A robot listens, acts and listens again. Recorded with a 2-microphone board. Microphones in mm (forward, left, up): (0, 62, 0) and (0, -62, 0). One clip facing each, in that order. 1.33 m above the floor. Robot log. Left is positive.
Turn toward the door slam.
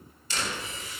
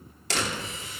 cmd yaw -90
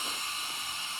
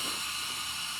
end: I heard a door slam from this way, but can't make it out now.